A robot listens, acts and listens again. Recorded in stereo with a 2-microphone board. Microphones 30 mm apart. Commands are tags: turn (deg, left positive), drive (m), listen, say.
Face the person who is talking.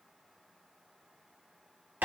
<listen/>
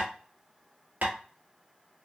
<listen/>
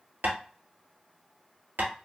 <say>I can't make out anyone speaking to turn to.</say>